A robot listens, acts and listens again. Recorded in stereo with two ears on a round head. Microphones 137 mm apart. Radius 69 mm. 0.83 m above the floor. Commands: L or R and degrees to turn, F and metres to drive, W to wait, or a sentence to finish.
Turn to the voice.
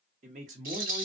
R50
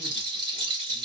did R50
W
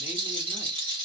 W
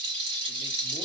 I heard a man speaking, but can't make it out now. It was about straight ahead or 80° right.